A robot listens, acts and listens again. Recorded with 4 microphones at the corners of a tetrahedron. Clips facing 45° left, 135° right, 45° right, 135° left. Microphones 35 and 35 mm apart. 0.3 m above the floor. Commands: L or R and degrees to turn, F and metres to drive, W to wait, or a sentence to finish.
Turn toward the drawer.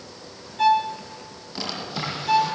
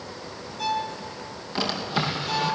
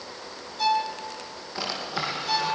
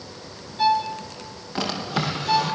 L165
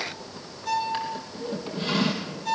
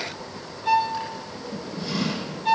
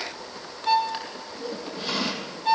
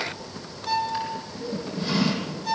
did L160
Facing the drawer.